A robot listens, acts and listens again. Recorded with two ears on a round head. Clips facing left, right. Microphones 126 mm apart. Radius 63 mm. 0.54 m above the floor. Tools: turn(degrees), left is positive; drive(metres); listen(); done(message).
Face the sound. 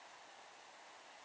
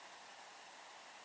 listen()
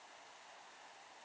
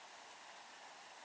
listen()
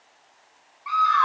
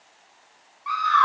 turn(degrees=30)
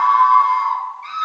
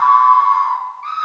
turn(degrees=140)
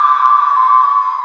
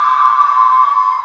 turn(degrees=-20)
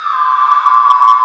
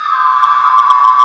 done("Found it: a scream, straight ahead.")